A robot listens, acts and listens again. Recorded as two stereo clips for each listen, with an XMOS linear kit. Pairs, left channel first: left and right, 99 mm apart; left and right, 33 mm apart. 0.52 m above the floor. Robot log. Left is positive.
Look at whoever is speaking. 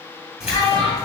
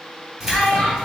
note: The child speaking: about 35° left or 145° left.
cmd yaw +35
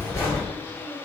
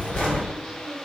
cmd idle
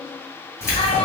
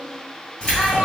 cmd idle
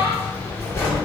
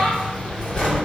end: I heard a child speaking, but can't make it out now. It was about straight ahead or 110° left.